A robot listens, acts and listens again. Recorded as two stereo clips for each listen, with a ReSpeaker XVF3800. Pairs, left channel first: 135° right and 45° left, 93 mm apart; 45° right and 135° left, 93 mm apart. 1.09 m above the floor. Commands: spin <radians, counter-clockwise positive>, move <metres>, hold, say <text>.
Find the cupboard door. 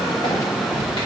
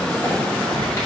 hold
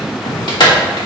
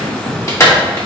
hold
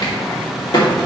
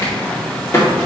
say I can't make out a cupboard door to turn to.